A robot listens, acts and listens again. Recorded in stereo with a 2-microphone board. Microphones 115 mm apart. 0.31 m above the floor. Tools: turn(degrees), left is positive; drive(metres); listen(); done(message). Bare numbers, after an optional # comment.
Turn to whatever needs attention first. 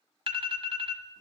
# The alarm: about 50° right or 130° right.
turn(-50)
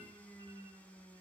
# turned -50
listen()
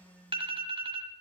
# So it is at 65° right.
turn(-65)
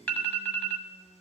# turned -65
# The alarm is now 15° left.
turn(15)
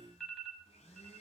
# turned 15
done("Facing the alarm.")